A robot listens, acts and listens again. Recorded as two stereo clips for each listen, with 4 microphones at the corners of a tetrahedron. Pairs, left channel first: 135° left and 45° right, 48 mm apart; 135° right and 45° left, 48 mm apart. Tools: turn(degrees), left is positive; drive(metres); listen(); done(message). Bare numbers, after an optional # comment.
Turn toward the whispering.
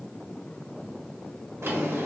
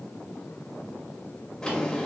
listen()
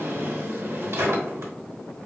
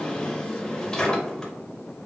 listen()
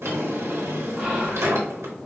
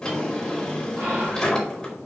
# The whispering: 35° left.
turn(35)
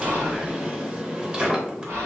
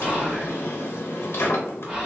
# The whispering is now 20° right.
turn(-20)
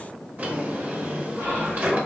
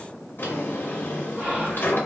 done("Found it: whispering, straight ahead, 1 to 2 m away.")